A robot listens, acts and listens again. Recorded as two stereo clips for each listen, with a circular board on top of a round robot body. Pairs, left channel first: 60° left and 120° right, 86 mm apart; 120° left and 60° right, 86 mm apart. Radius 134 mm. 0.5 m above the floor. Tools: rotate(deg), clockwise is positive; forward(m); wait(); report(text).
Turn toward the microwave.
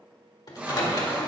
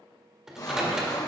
rotate(-25)
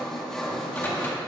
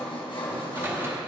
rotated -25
wait()
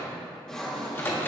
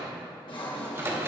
report("Facing the microwave, 1 to 2 m away.")